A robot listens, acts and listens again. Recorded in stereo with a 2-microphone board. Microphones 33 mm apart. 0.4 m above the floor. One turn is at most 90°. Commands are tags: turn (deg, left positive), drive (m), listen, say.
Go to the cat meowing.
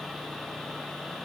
<listen/>
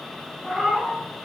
<turn deg="-30"/>
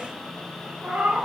<turn deg="-90"/>
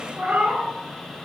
<turn deg="-65"/>
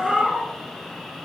<turn deg="-10"/>
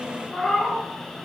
<drive m="1.0"/>
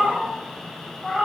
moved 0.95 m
<drive m="1.0"/>
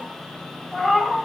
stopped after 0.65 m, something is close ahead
<turn deg="10"/>
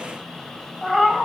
<say>I am next to the cat meowing.</say>